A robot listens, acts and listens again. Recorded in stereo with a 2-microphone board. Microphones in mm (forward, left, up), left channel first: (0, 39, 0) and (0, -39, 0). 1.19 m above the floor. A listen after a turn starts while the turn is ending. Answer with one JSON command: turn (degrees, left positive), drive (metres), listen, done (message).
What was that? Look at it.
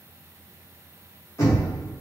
{"turn": 35}
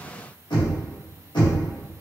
{"turn": 110}
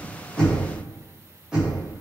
{"turn": -10}
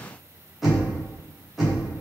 {"done": "Facing the knocking."}